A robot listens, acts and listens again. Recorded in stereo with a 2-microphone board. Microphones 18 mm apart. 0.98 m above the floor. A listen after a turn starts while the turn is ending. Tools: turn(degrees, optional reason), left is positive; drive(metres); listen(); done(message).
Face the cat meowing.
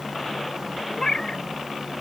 turn(degrees=35, reason="The cat meowing: about 35° left or 145° left.")
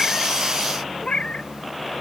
turn(degrees=115, reason="So it is at 115° left.")
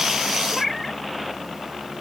done("Found it: a cat meowing, straight ahead.")